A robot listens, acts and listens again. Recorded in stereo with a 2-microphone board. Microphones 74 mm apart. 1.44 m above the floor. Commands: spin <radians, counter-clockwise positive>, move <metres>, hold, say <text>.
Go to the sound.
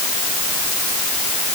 hold
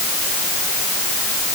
hold
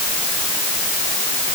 say I can't make out anything.